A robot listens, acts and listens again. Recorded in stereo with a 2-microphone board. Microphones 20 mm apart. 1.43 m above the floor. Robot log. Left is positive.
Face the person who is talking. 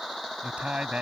cmd yaw -90
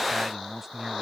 note: So it is at 10° right.
cmd yaw -10
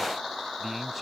end: Facing the man speaking.